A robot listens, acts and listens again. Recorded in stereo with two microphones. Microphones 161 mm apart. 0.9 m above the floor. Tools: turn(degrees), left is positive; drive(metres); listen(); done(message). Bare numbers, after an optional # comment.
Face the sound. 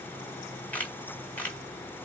turn(30)
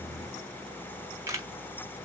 # So it is at 20° right.
turn(-20)
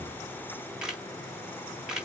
done("Facing the camera shutter.")